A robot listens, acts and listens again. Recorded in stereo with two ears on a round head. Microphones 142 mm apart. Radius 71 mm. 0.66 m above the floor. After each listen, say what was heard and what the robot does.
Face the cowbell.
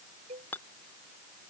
The cowbell: about 50° right or 130° right. Turn 50° right.
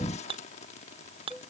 Facing the cowbell.